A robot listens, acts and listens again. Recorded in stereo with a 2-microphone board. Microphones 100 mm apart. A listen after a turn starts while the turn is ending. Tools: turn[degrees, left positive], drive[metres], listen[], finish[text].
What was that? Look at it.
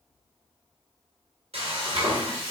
Action: turn[-90]
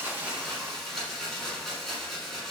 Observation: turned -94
Action: finish[Found it: frying, straight ahead.]